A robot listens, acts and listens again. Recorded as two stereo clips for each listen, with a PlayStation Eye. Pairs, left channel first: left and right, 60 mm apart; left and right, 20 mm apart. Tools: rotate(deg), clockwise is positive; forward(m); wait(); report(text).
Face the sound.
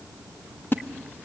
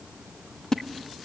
rotate(-35)
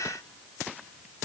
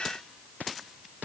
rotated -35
wait()
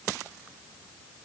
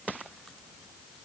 report("I heard a splash, but can't make it out now. It was about straight ahead or 110° left.")